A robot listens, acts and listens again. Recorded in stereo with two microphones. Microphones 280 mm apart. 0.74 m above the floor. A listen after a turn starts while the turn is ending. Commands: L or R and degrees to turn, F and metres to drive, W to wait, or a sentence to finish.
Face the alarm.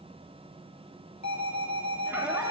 L70
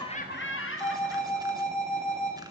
Found it: an alarm, straight ahead, over 4 m away.